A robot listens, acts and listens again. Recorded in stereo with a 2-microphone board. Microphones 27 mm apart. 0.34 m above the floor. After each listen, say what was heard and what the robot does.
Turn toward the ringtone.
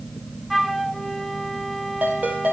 The ringtone: about 70° right or 110° right. Turn 70° right.
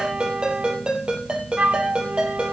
So it is at 40° right. Turn 40° right.
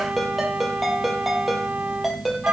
Facing the ringtone.